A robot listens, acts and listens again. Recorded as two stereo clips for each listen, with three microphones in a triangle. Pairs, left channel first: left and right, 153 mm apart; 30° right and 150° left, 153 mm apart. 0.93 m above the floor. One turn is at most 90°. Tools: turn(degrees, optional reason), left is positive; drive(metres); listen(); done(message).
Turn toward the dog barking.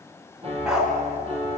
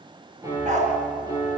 turn(degrees=-90, reason="The dog barking: 175° right.")
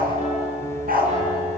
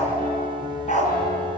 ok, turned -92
turn(degrees=-70, reason="The dog barking is now 70° right.")
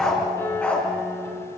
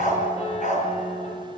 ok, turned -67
turn(degrees=10, reason="The dog barking is now 10° left.")
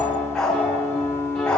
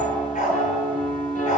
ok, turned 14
done("Facing the dog barking, over 4 m away.")